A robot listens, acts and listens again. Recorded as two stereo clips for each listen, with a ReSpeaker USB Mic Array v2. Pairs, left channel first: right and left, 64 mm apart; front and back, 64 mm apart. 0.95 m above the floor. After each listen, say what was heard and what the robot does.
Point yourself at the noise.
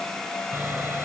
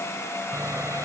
The sawing: 145° left. Turn 145° left.
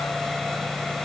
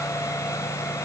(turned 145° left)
Found it: sawing, straight ahead.